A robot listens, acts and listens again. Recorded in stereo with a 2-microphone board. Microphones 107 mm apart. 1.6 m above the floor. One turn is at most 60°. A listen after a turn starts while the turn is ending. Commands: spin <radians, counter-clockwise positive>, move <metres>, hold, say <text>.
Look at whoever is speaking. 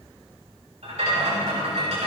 hold
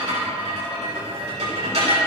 hold
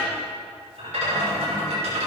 say I can't make out anyone speaking, only a rattle.